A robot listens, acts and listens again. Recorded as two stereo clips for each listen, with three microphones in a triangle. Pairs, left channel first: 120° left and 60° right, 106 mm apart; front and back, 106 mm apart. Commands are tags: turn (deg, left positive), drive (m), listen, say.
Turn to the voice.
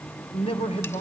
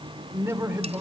<turn deg="115"/>
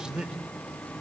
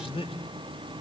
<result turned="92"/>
<turn deg="20"/>
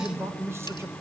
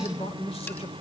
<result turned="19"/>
<say>Found it: a man speaking, straight ahead.</say>